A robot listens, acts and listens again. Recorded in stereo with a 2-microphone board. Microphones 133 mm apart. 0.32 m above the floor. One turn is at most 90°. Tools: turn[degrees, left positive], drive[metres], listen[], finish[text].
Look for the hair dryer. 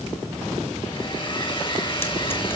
Thought: The hair dryer: about 40° left or 140° left.
Action: turn[40]
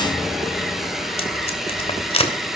Action: finish[Facing the hair dryer.]